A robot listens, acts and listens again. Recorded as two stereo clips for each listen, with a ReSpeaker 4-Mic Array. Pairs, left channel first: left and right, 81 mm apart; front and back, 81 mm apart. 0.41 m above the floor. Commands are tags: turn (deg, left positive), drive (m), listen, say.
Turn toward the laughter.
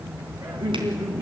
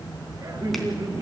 <turn deg="-130"/>
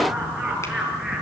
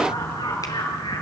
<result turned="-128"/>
<say>Found it: laughter, straight ahead.</say>